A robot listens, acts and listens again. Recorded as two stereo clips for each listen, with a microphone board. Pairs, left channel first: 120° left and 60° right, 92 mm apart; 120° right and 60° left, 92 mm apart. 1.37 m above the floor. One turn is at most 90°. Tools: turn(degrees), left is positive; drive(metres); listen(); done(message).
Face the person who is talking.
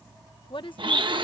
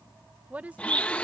turn(degrees=90)
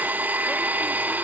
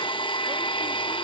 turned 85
turn(degrees=50)
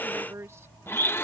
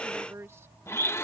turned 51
done("Found it: a woman speaking, straight ahead.")